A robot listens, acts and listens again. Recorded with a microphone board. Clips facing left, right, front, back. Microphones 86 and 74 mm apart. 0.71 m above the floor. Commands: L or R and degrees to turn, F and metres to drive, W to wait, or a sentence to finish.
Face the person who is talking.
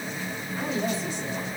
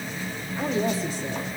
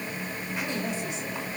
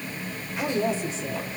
R130
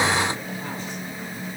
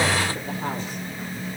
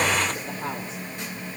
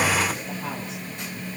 W
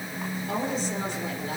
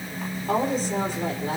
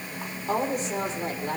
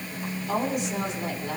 R50
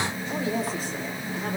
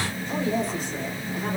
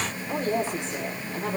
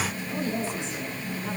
Facing the woman speaking.